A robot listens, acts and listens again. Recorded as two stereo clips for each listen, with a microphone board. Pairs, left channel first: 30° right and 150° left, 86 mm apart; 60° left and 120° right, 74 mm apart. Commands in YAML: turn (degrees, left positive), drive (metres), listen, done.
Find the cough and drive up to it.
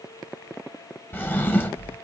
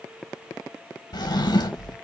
listen: true
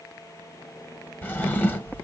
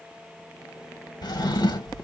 listen: true
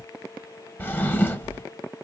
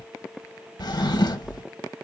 done: "I can't make out a cough, only a drawer."